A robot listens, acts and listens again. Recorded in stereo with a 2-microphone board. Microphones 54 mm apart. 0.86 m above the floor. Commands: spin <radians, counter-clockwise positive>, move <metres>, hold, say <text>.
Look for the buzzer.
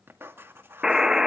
spin -0.52
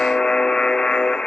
spin 0.26
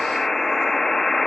say Facing the buzzer, under 1 m away.